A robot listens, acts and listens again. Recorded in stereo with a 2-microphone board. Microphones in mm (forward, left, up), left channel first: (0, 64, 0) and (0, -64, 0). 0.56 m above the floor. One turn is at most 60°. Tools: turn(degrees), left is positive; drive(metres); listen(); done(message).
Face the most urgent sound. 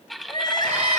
turn(degrees=35)
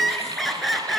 done("Facing the crying.")